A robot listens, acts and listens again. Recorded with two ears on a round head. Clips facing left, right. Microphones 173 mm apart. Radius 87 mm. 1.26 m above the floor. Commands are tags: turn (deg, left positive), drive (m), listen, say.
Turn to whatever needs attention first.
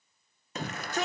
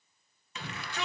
<turn deg="40"/>
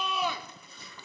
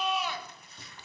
<turn deg="100"/>
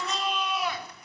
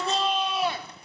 <turn deg="-25"/>
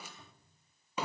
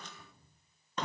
<turn deg="10"/>
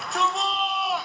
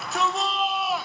<say>Found it: a shout, straight ahead.</say>